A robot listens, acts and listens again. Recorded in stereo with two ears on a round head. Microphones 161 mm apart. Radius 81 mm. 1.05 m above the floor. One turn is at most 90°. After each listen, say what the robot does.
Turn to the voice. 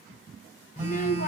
Turn 45° left.
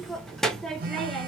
Facing the child speaking.